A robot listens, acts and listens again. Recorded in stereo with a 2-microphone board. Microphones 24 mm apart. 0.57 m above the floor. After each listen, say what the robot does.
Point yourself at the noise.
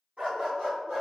Turn 55° right.
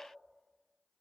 Keep listening.
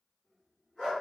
Turn 15° left.
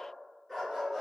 Found it: a dog barking, straight ahead, 2 to 4 m away.